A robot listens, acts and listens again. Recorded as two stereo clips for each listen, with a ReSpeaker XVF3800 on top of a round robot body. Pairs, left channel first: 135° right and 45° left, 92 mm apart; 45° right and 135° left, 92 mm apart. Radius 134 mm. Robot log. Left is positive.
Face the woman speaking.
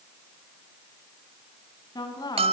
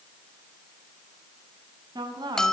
note: The woman speaking: straight behind.
cmd yaw +180
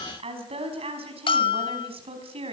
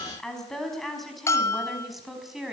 note: The woman speaking is now 50° left.
cmd yaw +50
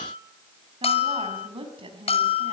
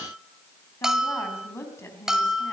note: The woman speaking is now 20° left.
cmd yaw +20
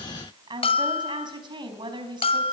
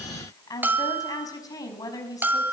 end: Facing the woman speaking.